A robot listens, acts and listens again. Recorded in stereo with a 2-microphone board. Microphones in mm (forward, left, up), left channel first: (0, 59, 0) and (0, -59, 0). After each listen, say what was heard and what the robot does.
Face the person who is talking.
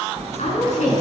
Turn 90° left.
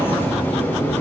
Keep listening.
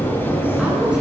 Keep listening.
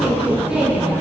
I heard a woman speaking from this way, but can't make it out now.